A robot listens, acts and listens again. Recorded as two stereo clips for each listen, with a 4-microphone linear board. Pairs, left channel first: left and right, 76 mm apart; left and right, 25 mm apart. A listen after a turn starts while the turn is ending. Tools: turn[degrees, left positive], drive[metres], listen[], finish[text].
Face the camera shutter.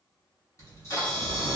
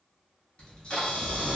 Thought: The camera shutter: about 40° left or 140° left.
Action: turn[40]
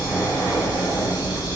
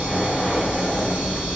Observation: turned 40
Action: listen[]
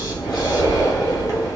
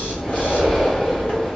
Action: listen[]
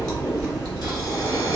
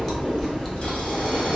Action: finish[I heard a camera shutter, but can't make it out now. It was about straight ahead or 100° left.]